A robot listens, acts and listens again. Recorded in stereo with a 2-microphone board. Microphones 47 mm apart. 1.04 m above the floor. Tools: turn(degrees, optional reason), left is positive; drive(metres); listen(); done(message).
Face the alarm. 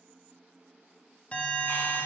turn(degrees=25, reason="The alarm: about 25° left or 155° left.")
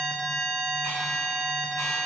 done("Facing the alarm, 1 to 2 m away.")